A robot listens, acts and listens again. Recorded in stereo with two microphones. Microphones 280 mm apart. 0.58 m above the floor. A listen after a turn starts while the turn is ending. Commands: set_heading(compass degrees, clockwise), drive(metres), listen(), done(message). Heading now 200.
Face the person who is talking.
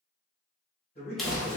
set_heading(165)
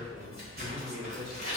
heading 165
done("Facing the man speaking, 1 to 2 m away.")